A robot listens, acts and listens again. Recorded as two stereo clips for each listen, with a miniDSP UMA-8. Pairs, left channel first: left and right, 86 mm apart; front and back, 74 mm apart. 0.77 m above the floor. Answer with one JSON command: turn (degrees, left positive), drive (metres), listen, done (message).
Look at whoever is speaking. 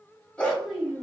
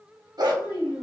{"done": "Found it: a child speaking, straight ahead, 1 to 2 m away."}